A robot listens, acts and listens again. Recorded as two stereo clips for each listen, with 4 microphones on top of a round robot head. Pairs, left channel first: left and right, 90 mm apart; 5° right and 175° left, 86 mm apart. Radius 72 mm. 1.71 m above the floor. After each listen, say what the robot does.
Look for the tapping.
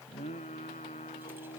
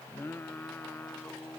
Keep listening.
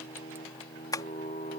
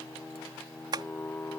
Turn 140° left.
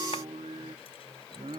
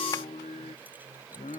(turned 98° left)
Turn 40° left.
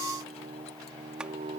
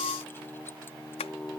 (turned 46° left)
Facing the tapping.